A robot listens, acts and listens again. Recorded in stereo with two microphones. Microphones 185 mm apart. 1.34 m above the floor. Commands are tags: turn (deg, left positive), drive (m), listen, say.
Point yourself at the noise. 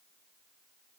<listen/>
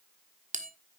<turn deg="-40"/>
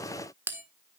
<turn deg="-15"/>
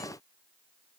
<listen/>
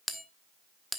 <say>Facing the bell.</say>